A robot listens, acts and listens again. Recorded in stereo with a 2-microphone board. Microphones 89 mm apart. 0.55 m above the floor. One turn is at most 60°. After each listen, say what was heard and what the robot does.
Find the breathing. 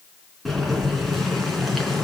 Keep listening.
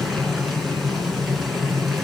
Keep listening.
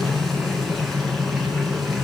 I can't make out breathing, only boiling.